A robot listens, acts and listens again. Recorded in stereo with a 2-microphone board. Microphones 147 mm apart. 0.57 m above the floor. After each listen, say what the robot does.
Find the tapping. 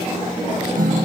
Keep listening.
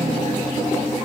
Keep listening.
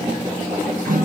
I can't make out tapping to turn to.